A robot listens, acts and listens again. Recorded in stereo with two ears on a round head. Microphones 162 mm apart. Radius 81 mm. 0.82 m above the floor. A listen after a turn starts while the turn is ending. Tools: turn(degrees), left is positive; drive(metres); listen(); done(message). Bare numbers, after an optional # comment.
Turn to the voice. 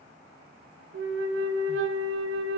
listen()
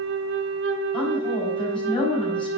# The woman speaking: about 30° left or 150° left.
turn(30)
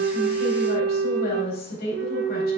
# So it is at 125° left.
turn(125)
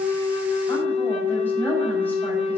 listen()
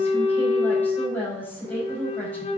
# The woman speaking is now 10° left.
turn(10)
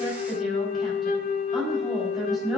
done("Found it: a woman speaking, straight ahead, over 4 m away.")